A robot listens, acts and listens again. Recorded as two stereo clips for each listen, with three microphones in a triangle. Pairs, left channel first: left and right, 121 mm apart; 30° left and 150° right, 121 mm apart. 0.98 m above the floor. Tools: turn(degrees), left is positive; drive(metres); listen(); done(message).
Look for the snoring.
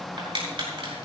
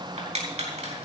listen()
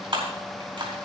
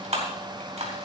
listen()
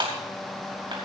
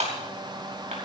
done("I can't make out snoring to turn to.")